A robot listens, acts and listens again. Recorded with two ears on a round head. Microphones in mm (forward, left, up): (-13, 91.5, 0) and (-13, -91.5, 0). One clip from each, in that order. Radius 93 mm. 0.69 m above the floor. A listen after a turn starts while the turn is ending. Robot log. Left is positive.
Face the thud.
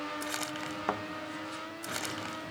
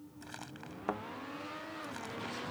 note: The thud: about 20° left or 160° left.
cmd yaw +20
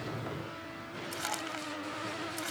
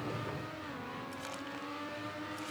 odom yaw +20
cmd idle
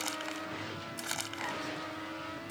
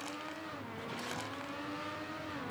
end: I heard a thud, but can't make it out now. It was about straight ahead or 140° left.